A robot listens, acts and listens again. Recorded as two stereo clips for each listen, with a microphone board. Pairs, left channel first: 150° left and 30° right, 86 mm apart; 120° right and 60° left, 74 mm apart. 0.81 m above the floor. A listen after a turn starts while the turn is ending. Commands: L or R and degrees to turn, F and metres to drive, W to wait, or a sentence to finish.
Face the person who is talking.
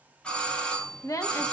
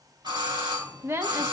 L110
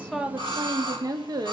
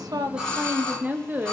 Found it: a woman speaking, straight ahead.